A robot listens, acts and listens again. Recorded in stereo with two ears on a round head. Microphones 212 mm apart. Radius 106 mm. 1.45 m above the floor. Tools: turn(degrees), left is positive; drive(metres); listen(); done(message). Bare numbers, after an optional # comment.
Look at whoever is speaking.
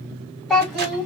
turn(30)
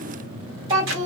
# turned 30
# So it is at 25° right.
turn(-25)
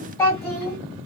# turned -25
# The child speaking is now 20° left.
turn(20)
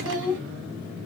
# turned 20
done("Facing the child speaking.")